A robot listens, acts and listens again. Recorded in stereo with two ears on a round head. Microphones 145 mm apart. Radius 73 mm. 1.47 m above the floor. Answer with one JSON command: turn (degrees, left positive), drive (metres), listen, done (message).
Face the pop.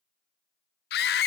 {"listen": true}
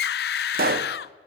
{"turn": -65}
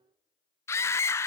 {"listen": true}
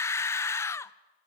{"done": "I heard a pop, but can't make it out now. It was about straight ahead or 50° right."}